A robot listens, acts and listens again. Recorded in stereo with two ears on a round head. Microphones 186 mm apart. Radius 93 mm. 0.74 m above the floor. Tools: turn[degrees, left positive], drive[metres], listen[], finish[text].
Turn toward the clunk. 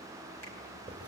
Action: listen[]
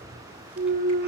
Thought: The clunk: about 40° right or 140° right.
Action: turn[-40]
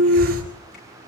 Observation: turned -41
Thought: So it is at 90° right.
Action: turn[-90]
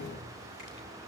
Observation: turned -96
Action: finish[Facing where the clunk came from. I can't hear it now.]